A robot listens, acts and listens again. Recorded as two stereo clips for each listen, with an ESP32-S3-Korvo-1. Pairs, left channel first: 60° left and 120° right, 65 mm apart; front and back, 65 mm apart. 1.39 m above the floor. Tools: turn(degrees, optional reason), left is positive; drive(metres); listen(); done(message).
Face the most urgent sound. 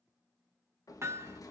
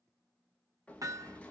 listen()
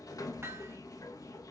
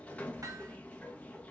listen()
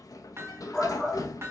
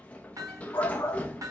turn(degrees=-10, reason="The shout: 10° right.")
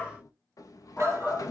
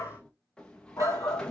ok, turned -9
done("Found it: a shout, straight ahead.")